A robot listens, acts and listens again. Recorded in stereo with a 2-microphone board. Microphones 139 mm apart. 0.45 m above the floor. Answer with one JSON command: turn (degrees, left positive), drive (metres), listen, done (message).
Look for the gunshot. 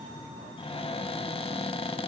{"listen": true}
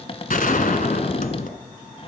{"turn": 75}
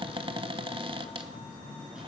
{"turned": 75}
{"listen": true}
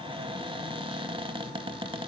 {"done": "I heard a gunshot, but can't make it out now. It was about straight ahead or 30° left."}